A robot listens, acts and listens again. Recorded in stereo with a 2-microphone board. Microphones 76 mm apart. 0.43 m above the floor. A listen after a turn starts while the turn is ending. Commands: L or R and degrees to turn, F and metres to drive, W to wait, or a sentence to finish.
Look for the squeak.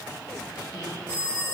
W
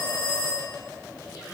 W
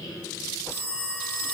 L60
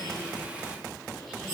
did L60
W
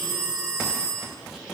W
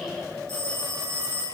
I heard a squeak, but can't make it out now. It was about straight ahead or 60° left.